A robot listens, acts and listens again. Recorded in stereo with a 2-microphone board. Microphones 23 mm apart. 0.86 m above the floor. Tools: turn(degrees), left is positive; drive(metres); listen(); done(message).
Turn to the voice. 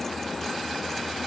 listen()
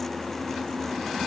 listen()
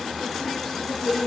turn(degrees=-20)
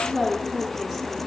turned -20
turn(degrees=-30)
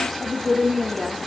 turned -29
turn(degrees=-30)
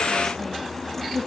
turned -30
listen()
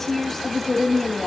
turn(degrees=15)
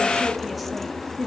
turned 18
done("Facing the woman speaking.")